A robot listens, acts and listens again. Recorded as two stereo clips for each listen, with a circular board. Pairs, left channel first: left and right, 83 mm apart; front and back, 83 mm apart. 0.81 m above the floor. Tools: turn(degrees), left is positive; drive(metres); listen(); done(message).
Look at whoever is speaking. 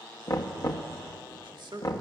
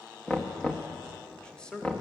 turn(degrees=-80)
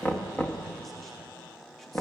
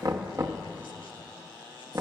listen()
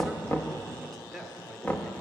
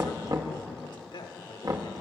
done("Facing the man speaking, 1 to 2 m away.")